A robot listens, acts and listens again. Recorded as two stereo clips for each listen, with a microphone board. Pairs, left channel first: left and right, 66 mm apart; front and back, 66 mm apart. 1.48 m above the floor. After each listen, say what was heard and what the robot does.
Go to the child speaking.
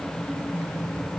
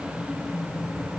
Keep listening.
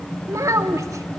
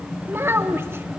The child speaking: 125° right. Turn 125° right.
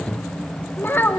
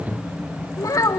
The child speaking is now 30° left. Turn 30° left.
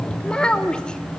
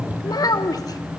The child speaking is now 15° left. Turn 15° left.
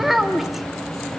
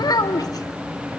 Drive 1.0 m forward.
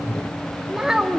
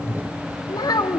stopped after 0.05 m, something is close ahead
The child speaking is now 10° right. Turn 10° right.
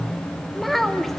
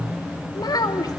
Something is in my way. I am facing the child speaking but have not reached it.